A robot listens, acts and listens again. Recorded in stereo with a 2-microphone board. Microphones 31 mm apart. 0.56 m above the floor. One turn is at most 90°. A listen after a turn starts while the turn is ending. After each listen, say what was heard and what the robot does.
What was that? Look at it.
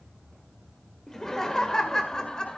The laughter: about 25° left or 155° left. Turn 25° left.
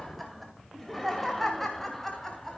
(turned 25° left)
Turn 30° left.
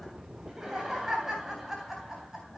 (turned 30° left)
So it is at 10° right. Turn 10° right.
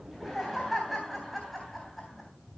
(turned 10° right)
Found it: laughter, straight ahead, 2 to 4 m away.